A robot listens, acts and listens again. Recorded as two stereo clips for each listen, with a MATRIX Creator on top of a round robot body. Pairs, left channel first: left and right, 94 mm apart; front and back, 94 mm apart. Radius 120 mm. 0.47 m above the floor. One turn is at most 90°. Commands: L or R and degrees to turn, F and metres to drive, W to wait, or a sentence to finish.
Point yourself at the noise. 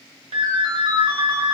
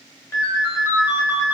R65
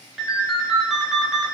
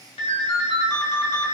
Found it: a ringtone, straight ahead.